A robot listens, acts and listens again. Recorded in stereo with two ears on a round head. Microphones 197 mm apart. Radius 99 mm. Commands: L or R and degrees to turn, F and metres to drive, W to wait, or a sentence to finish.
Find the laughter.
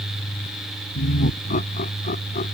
L35
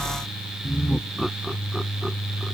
Facing the laughter.